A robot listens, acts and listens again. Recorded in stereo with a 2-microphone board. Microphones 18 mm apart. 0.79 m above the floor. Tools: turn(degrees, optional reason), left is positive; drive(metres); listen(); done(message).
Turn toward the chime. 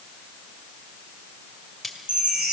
turn(degrees=-90)
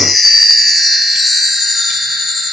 turn(degrees=-10, reason="So it is at 10° right.")
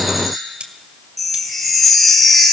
done("Facing the chime.")